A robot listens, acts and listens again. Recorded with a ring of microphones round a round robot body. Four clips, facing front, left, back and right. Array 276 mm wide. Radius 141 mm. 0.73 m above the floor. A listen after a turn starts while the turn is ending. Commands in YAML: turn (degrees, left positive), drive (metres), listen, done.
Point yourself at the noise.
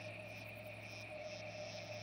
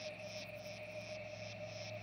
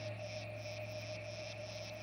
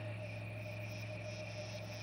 listen: true
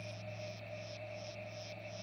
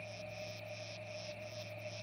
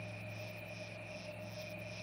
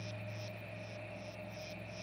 listen: true
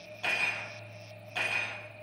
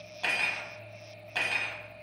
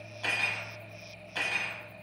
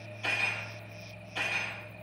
turn: 90
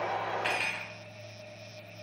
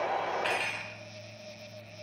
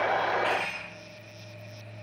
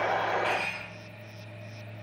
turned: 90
turn: 25
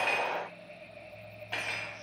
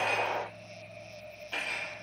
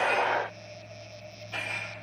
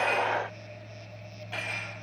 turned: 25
turn: -15
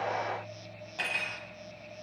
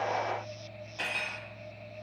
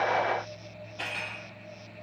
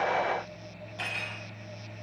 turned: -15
done: "Facing the cutlery clinking."